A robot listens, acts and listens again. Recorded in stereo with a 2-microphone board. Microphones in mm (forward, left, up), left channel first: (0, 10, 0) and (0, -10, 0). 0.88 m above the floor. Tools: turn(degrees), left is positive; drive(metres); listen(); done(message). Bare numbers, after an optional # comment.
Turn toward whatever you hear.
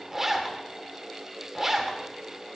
# The zipper: about 25° right or 155° right.
turn(-25)
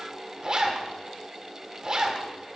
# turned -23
# So it is at 130° right.
turn(-130)
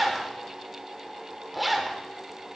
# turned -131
done("Facing the zipper, 1 to 2 m away.")